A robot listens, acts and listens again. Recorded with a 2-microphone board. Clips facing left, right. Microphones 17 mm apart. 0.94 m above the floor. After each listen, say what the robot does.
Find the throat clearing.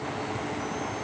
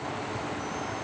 Keep listening.
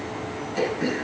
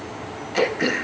Turn 70° right.
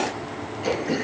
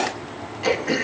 Turn 25° right.
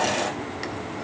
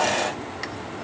Keep listening.
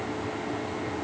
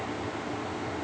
Keep listening.
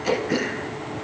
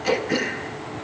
Found it: throat clearing, straight ahead.